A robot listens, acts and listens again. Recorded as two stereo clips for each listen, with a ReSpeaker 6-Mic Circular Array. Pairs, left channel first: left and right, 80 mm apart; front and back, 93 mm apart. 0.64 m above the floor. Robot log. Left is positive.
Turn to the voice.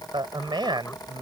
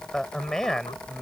note: The man speaking: 85° right.
cmd yaw -85
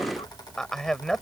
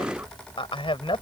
end: Found it: a man speaking, straight ahead.